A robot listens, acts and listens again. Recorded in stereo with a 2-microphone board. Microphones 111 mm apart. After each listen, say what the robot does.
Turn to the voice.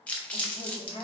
Turn 55° left.
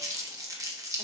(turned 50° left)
Keep listening.
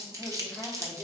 Facing the woman speaking.